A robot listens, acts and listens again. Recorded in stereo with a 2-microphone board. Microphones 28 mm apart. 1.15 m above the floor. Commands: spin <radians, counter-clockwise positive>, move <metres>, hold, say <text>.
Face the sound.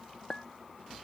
spin 0.61
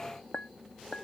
spin 1.92
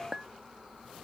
spin -0.35
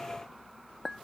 say Found it: a clink, straight ahead.